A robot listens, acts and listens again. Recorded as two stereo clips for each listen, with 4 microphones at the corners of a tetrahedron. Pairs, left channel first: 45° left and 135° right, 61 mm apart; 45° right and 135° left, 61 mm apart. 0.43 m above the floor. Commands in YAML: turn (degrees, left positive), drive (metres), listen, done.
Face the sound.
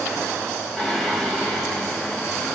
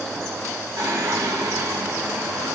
turn: 120
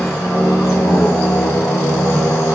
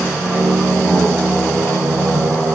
turn: 10
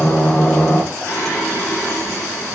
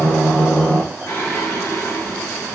done: "Found it: singing, straight ahead."